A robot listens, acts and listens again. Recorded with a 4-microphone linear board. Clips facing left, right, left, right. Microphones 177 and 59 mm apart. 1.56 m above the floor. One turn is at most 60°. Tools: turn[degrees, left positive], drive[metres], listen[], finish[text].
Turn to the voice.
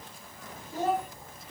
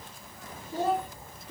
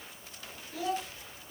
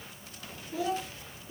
Thought: The child speaking: about 20° right or 160° right.
Action: turn[-20]
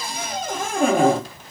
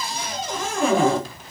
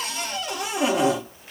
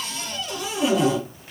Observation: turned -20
Action: listen[]
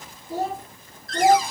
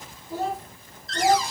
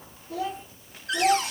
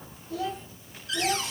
Thought: So it is at 55° left.
Action: turn[55]
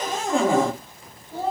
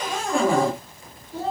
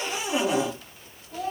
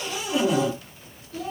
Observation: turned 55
Thought: The child speaking is now 50° left.
Action: turn[50]
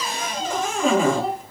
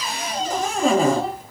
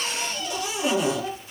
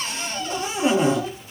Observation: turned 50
Action: finish[Facing the child speaking, 2 to 4 m away.]